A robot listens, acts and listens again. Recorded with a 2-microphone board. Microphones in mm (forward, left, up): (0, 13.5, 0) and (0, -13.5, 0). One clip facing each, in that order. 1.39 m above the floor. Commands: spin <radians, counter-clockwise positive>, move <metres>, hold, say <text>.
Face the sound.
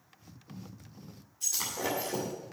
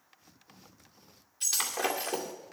spin -1.22
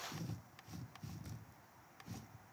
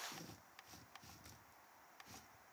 hold
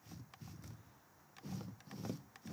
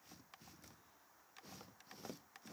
say I heard breaking glass, but can't make it out now. It was about straight ahead or 40° right.